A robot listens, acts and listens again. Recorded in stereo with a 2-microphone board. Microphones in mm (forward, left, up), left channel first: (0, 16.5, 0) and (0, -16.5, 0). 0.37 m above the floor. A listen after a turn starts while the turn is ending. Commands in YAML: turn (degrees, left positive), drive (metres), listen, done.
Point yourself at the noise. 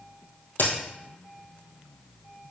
turn: 90
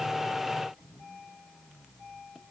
done: "Facing where the crack came from. I can't hear it now."